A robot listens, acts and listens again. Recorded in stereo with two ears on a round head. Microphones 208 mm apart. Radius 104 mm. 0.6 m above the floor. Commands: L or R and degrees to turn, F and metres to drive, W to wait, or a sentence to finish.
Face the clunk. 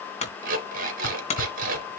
L30
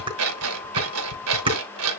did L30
W
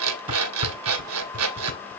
I heard a clunk, but can't make it out now. It was about straight ahead or 120° left.